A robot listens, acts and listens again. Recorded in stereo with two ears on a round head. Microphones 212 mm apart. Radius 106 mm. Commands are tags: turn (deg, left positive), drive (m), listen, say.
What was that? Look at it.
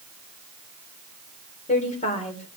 <turn deg="30"/>
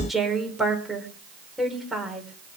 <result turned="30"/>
<say>Found it: a woman speaking, straight ahead, 2 to 4 m away.</say>